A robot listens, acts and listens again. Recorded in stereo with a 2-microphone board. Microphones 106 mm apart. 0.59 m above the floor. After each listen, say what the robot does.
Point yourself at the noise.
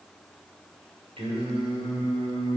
Turn 65° right.
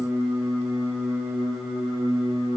Turn 15° right.
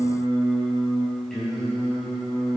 Found it: singing, straight ahead.